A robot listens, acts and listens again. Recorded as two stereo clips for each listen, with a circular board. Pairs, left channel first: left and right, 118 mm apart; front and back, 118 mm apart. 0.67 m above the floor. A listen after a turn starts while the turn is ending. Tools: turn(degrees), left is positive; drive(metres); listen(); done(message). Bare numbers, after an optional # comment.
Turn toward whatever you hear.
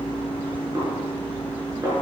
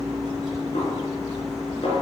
# The snare drum: 30° right.
turn(-30)
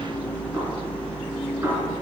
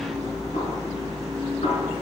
# The snare drum is now 20° right.
turn(-20)
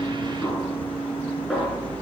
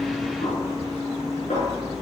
done("Found it: a snare drum, straight ahead, over 4 m away.")